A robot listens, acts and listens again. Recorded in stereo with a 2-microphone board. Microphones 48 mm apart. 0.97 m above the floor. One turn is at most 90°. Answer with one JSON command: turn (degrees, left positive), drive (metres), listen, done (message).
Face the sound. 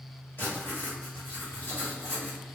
{"turn": 50}
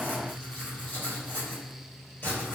{"turn": 65}
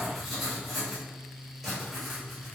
{"done": "Found it: writing, straight ahead, 1 to 2 m away."}